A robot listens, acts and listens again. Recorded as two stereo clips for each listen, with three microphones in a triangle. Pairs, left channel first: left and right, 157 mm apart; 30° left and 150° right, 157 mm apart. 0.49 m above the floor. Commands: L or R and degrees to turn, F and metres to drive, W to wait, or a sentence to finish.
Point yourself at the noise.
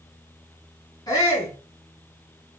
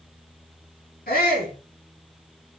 L25
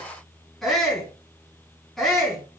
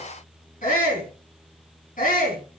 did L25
Facing the shout.